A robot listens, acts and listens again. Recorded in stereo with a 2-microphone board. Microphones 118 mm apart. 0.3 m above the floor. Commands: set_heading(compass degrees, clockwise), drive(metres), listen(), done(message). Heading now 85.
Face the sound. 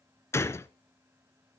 set_heading(65)
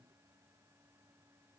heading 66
listen()
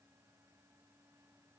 done("I heard a gunshot, but can't make it out now. It was about 5° left or 140° left.")